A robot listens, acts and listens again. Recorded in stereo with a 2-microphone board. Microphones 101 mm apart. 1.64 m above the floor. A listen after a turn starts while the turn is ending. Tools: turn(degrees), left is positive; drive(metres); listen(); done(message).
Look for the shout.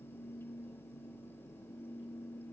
listen()
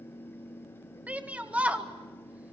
turn(degrees=-30)
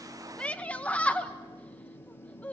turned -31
turn(degrees=15)
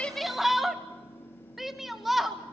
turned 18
done("Found it: a shout, straight ahead.")